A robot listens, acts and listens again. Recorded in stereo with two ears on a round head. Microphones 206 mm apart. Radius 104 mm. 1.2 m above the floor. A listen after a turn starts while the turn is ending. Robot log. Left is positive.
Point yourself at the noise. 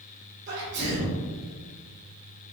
note: The sneeze: about 50° right or 130° right.
cmd yaw -50
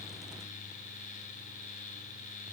cmd idle
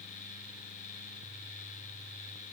end: I heard a sneeze, but can't make it out now. It was about straight ahead or 80° right.